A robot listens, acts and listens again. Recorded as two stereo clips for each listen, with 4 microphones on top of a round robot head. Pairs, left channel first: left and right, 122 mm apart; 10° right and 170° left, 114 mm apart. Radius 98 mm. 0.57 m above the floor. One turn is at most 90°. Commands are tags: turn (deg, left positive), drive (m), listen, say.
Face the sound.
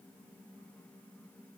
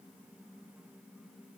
<listen/>
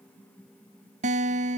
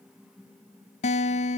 <turn deg="-50"/>
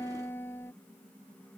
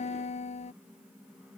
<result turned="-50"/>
<turn deg="15"/>
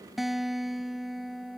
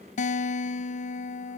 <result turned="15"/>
<say>Facing the guitar.</say>